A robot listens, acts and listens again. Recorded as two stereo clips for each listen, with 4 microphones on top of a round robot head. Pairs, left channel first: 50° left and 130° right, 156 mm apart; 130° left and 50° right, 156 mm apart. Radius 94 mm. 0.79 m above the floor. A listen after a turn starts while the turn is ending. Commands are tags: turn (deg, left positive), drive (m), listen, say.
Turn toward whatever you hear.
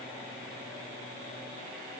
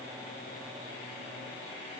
<listen/>
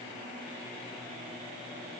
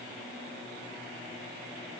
<listen/>
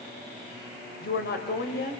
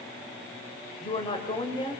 <turn deg="70"/>
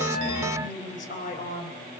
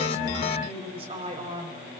<say>Found it: a woman speaking, straight ahead, 2 to 4 m away.</say>